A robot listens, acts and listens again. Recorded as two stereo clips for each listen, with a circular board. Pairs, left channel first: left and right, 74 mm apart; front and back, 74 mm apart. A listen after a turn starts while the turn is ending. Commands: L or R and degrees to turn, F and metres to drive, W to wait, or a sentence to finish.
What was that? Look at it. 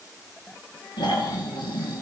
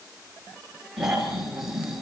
L95
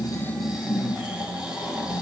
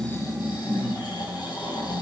R10
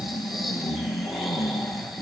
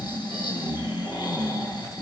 Found it: snoring, straight ahead, over 4 m away.